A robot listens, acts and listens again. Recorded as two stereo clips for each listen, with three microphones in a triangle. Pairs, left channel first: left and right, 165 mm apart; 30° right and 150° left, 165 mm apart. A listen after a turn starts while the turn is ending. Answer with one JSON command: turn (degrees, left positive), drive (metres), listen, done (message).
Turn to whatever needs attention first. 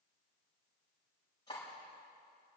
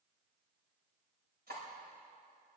{"listen": true}
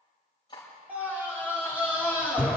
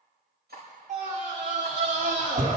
{"turn": -170}
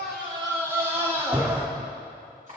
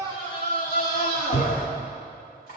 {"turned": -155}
{"turn": -15}
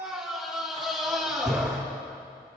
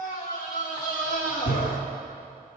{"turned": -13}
{"done": "Found it: a scream, straight ahead."}